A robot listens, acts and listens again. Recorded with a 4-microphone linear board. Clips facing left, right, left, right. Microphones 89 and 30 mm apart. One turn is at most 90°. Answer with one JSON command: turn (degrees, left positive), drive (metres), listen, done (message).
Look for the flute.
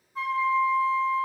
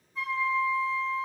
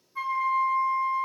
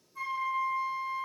{"turn": 40}
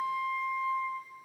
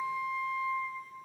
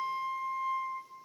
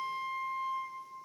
{"done": "Found it: a flute, straight ahead."}